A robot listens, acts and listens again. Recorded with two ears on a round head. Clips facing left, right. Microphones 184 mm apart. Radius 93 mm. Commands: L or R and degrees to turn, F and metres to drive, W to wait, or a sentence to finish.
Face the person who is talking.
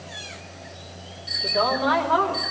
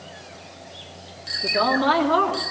R50
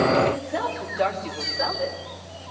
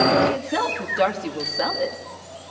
R55
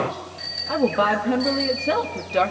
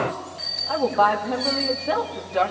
L35
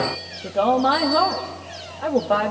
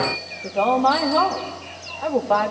L10
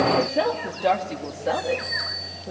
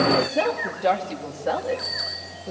Facing the woman speaking, 2 to 4 m away.